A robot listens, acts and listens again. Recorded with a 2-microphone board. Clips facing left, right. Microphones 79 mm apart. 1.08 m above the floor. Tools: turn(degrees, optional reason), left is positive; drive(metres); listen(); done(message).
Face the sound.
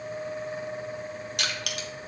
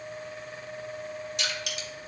turn(degrees=60, reason="The crushing: about 60° left or 120° left.")
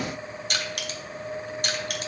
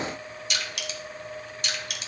turn(degrees=50, reason="So it is at 50° left.")
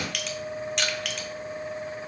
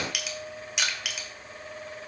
done("Found it: crushing, straight ahead, 1 to 2 m away.")